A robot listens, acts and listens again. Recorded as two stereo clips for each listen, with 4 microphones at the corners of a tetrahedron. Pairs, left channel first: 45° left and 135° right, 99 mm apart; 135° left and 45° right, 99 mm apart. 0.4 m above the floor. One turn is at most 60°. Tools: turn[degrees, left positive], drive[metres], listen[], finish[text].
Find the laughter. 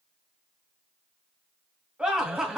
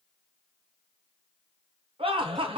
Thought: The laughter: 50° right.
Action: turn[-50]
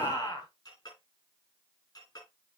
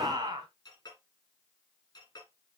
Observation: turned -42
Action: finish[Facing the laughter, 2 to 4 m away.]